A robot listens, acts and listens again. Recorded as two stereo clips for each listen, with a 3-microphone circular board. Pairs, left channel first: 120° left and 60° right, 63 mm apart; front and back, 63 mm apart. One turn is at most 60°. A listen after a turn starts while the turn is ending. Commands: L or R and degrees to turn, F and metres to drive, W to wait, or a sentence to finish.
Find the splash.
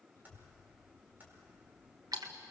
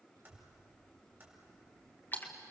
R55
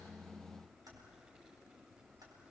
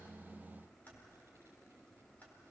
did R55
Facing where the splash came from. I can't hear it now.